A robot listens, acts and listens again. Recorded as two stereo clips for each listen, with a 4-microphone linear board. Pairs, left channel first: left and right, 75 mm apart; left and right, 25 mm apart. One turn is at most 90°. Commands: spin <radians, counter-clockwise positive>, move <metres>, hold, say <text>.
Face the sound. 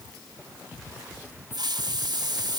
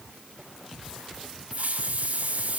spin -1.13
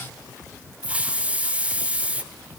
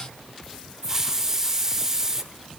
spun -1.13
spin -0.35
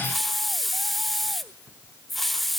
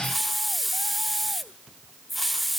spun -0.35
say Found it: a hiss, straight ahead, 1 to 2 m away.